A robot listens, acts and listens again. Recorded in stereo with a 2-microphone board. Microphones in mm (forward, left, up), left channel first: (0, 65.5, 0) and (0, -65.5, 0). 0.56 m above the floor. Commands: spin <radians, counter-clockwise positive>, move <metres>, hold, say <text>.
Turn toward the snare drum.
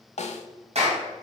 spin 1.05
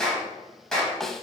say Found it: a snare drum, straight ahead, under 1 m away.